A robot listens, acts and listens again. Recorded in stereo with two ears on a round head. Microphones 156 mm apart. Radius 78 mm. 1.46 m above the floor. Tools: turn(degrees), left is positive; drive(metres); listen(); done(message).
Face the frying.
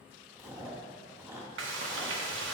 turn(degrees=-90)
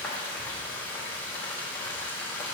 turn(degrees=10)
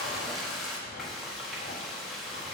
done("Found it: frying, straight ahead.")